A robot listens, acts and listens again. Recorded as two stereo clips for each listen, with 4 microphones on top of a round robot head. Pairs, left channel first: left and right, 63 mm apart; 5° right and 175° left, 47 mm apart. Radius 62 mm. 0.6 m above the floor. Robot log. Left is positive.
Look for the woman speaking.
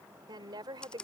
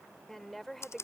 note: The woman speaking: 90° right.
cmd yaw -90
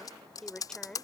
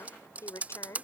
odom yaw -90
note: The woman speaking is now 10° left.
cmd yaw +10
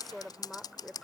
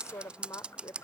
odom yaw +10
end: Facing the woman speaking.